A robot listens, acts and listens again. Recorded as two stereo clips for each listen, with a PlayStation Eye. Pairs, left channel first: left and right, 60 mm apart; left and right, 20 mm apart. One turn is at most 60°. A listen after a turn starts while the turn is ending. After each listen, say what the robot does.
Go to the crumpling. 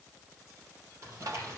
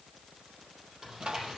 Turn 50° right.
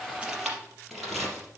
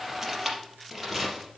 Drive 1.0 m forward.
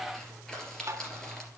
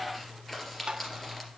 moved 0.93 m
Turn 10° left.
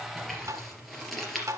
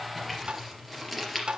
Drive 1.0 m forward.
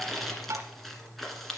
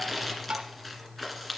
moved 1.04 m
Drive 1.0 m forward.
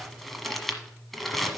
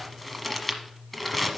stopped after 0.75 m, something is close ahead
Arrived at the crumpling, straight ahead.